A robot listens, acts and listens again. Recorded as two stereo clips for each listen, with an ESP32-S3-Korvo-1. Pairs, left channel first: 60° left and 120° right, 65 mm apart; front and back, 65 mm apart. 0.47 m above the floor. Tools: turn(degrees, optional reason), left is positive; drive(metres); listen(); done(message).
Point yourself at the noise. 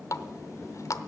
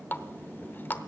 turn(degrees=50, reason="The running tap: 50° left.")
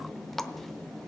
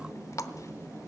turn(degrees=-25, reason="The running tap is now 25° right.")
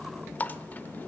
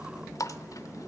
done("Found it: a running tap, straight ahead, under 1 m away.")